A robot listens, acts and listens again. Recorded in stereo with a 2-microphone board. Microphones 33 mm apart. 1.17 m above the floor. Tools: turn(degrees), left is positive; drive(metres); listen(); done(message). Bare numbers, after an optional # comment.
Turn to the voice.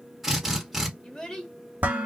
# The child speaking: about 20° left or 160° left.
turn(20)
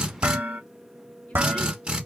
listen()
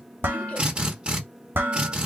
listen()
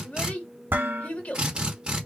# So it is at 140° left.
turn(140)
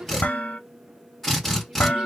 # The child speaking is now 20° right.
turn(-20)
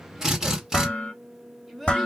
done("Found it: a child speaking, straight ahead.")